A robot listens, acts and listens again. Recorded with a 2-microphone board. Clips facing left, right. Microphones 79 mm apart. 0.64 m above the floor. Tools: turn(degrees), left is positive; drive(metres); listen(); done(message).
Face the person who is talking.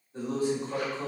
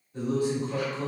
turn(degrees=35)
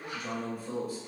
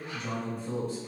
turn(degrees=10)
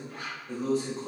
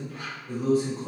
done("Facing the man speaking, 1 to 2 m away.")